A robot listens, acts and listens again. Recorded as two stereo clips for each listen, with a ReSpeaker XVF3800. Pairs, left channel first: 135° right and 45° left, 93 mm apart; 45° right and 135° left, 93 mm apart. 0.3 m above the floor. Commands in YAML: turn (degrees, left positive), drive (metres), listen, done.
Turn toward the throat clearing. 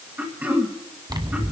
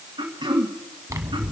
turn: 115
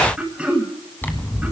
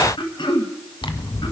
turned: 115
turn: -35
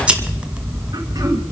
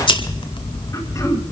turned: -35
listen: true
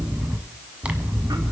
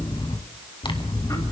listen: true
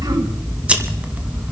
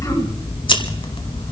done: "I heard throat clearing from this way, but can't make it out now."